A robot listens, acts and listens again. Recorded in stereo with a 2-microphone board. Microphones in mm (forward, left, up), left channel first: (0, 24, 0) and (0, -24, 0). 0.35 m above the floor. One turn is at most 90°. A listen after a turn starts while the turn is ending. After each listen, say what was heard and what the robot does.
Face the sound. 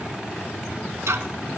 Turn 90° right.
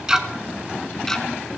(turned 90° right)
So it is at 10° left. Turn 10° left.
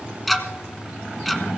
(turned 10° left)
Found it: ticking, straight ahead.